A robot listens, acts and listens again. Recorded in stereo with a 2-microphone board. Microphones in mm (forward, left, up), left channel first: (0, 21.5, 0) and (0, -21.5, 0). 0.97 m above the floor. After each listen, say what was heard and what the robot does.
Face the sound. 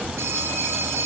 Turn 90° right.
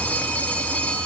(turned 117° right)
So it is at 25° left. Turn 25° left.
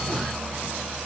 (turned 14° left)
Nothing new. It was at 10° left. Turn 10° left.
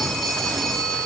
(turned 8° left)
Facing the phone ringing, over 4 m away.